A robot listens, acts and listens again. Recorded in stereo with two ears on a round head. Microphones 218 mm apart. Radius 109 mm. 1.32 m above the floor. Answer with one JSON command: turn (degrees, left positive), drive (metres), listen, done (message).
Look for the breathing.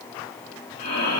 {"turn": 90}
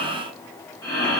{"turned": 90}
{"turn": 15}
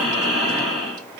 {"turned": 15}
{"done": "Facing the breathing, 1 to 2 m away."}